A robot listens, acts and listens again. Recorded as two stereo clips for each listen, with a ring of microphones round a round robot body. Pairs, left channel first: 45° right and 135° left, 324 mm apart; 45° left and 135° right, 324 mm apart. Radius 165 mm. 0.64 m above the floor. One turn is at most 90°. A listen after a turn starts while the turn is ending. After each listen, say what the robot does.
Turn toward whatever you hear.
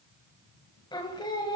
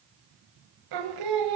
Turn 90° right.
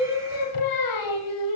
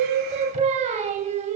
Turn 65° right.
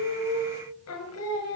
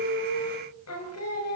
Found it: singing, straight ahead.